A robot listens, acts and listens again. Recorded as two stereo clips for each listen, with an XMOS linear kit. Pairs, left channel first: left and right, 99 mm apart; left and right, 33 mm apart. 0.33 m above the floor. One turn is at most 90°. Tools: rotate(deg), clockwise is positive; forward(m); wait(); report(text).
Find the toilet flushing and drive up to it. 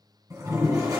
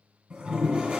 rotate(30)
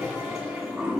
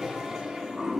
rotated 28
forward(1.0)
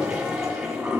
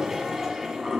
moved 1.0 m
forward(1.0)
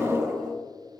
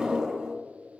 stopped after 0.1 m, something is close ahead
rotate(10)
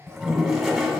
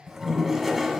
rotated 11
report("Arrived at the toilet flushing, straight ahead.")